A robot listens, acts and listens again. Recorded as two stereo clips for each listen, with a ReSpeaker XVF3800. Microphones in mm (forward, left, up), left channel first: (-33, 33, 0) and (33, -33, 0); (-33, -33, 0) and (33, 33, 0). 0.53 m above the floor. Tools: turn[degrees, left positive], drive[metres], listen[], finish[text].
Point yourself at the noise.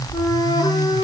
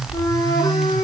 Thought: The flute: straight behind.
Action: turn[180]
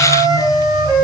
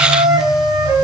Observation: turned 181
Action: finish[Found it: a flute, straight ahead, over 4 m away.]